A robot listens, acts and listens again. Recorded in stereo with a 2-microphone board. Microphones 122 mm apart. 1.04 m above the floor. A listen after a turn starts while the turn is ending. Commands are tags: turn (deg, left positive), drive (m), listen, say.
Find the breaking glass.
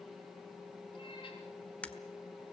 <turn deg="30"/>
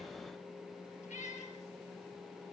<listen/>
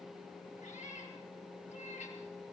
<say>I heard breaking glass, but can't make it out now. It was about 20° right or 140° left.</say>